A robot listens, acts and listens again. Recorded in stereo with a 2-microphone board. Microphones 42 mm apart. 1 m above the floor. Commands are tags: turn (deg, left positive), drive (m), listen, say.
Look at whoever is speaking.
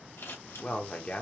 <turn deg="35"/>
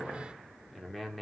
<say>Found it: a man speaking, straight ahead.</say>